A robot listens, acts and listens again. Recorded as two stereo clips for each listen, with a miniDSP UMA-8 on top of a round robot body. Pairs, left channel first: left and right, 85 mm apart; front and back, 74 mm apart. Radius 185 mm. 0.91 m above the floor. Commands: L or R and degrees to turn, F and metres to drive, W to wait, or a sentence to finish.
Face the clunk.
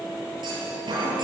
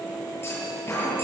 R55
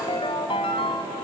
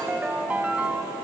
Facing where the clunk came from. I can't hear it now.